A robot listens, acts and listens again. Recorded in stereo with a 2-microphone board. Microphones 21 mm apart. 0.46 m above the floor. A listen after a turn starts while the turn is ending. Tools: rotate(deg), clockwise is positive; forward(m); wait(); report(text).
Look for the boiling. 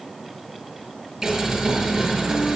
rotate(20)
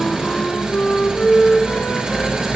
rotate(140)
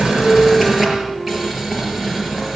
rotate(15)
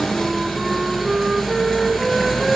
report("Found it: boiling, straight ahead.")